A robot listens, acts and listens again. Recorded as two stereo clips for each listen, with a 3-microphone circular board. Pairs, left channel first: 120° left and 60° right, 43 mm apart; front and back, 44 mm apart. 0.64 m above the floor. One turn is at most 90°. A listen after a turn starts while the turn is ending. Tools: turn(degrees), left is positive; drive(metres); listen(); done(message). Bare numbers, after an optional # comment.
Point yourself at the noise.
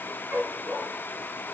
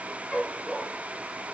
# The dog barking: 75° right.
turn(-75)
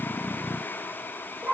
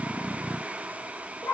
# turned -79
# The dog barking is now 15° left.
turn(15)
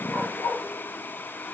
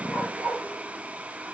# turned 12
done("Facing the dog barking, over 4 m away.")